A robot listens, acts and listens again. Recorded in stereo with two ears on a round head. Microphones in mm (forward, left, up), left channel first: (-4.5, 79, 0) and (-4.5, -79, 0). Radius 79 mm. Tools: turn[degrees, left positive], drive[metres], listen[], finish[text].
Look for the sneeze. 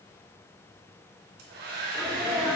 Action: turn[30]
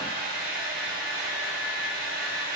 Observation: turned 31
Action: listen[]
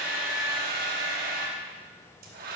Action: finish[I heard a sneeze, but can't make it out now. It was about 25° right or 145° left.]